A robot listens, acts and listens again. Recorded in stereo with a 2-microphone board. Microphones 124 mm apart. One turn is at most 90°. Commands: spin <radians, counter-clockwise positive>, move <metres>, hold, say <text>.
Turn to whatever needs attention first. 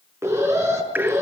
spin -0.44
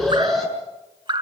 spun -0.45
say Found it: an alarm, straight ahead, over 4 m away.